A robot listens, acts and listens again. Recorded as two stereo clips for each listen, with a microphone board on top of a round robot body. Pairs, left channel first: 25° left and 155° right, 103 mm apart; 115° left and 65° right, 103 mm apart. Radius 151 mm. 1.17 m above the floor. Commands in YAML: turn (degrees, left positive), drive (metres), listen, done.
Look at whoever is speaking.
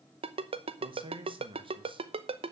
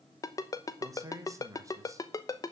turn: -125
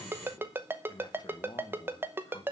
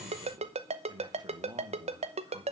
turn: -25
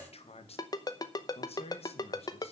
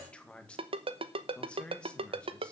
turn: 35
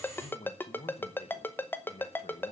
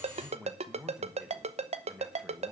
turn: 15
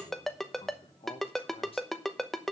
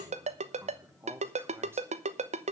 done: "Found it: a man speaking, straight ahead, 2 to 4 m away."